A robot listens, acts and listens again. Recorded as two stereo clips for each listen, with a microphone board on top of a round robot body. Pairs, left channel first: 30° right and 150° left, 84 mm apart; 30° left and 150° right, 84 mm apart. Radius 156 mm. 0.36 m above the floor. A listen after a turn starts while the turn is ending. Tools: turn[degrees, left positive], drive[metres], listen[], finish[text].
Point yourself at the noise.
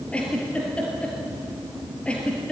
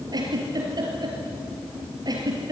Thought: The giggle: 105° right.
Action: turn[-105]
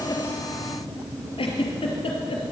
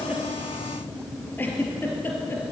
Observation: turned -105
Thought: The giggle is now 40° right.
Action: turn[-40]
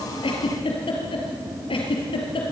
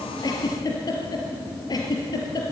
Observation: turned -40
Thought: The giggle is now 15° right.
Action: turn[-15]
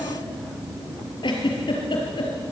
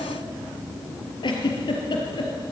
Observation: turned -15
Action: finish[Facing the giggle.]